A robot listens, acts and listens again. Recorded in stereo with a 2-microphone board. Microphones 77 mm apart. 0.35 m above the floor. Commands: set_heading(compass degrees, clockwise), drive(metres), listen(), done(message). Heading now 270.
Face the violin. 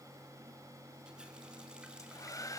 listen()
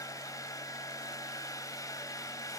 listen()
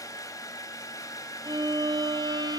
set_heading(335)
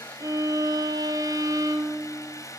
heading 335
set_heading(25)
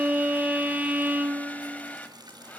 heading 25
set_heading(45)
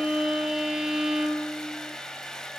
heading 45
done("Facing the violin, 1 to 2 m away.")